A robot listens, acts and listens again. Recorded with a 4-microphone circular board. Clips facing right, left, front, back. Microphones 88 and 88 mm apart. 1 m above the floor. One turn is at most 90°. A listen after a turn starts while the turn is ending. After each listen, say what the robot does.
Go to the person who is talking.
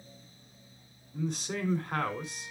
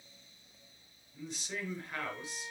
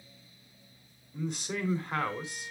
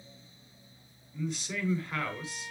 Turn 50° right.
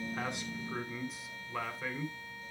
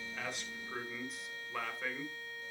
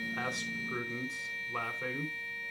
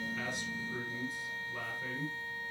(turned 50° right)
Drive 1.0 m forward.
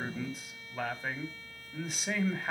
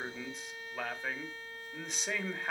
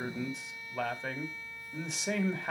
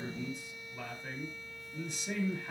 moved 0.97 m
Drive 1.0 m forward.
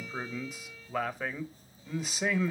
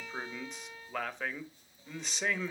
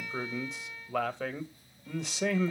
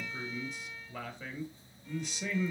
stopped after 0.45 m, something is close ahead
Arrived at the man speaking, straight ahead.